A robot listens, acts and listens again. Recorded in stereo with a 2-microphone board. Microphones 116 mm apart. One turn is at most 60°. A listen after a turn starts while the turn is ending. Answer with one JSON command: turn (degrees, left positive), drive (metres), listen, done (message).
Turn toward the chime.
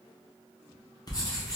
{"listen": true}
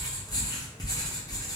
{"listen": true}
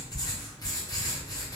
{"done": "I can't make out a chime, only writing."}